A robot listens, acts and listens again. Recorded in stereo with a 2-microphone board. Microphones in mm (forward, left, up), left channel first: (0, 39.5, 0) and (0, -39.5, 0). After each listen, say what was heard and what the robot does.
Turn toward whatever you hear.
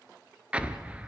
Turn 30° right.
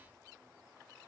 Keep listening.
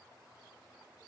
I heard an explosion, but can't make it out now. It was about 15° left or 135° right.